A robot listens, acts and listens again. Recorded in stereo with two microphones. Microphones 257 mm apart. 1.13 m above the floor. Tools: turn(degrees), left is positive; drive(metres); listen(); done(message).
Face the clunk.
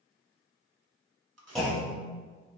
turn(degrees=30)
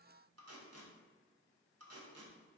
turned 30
listen()
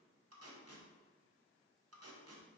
done("I heard a clunk, but can't make it out now. It was about 30° right or 150° left.")